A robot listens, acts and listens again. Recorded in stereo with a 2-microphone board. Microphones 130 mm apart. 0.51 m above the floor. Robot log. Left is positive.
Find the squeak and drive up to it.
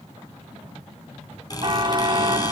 note: The squeak: about 30° left or 150° left.
cmd yaw +30
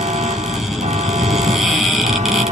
cmd fwd 1.0
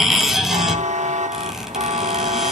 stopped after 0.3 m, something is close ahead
end: Something is in my way. I am facing the squeak but have not reached it.